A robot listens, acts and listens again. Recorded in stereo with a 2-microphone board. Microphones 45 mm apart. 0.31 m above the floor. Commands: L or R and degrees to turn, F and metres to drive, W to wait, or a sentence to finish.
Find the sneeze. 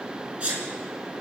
R25
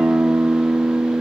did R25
W
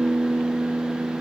I heard a sneeze, but can't make it out now. It was about straight ahead or 130° right.